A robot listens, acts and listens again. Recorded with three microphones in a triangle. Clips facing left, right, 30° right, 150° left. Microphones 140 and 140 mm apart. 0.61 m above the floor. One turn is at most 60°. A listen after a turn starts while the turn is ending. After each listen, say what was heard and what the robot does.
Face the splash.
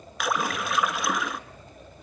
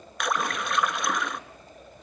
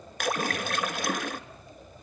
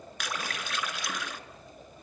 Found it: a splash, straight ahead.